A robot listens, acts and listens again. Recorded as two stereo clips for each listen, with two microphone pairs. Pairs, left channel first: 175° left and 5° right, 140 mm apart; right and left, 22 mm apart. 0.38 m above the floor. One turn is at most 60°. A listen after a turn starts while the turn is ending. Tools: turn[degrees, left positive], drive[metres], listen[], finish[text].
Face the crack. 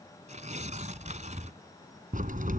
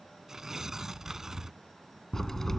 Thought: The crack: 15° right.
Action: turn[-15]
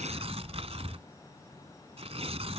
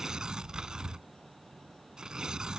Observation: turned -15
Action: finish[Facing where the crack came from. I can't hear it now.]